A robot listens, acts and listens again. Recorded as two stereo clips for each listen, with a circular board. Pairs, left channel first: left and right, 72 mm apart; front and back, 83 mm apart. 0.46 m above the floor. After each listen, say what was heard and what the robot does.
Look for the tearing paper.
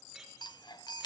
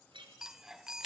Keep listening.
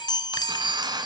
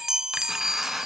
The tearing paper: 95° right. Turn 95° right.
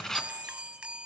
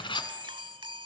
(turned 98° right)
Facing the tearing paper, 1 to 2 m away.